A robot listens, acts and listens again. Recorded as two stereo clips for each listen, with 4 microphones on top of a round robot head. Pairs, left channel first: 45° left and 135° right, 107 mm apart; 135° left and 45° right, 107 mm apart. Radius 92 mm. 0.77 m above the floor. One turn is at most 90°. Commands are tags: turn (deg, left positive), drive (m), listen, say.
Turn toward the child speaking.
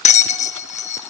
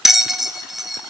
<listen/>
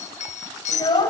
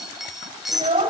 <turn deg="-10"/>
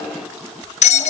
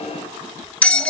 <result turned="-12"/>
<listen/>
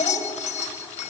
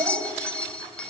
<say>Found it: a child speaking, straight ahead, over 4 m away.</say>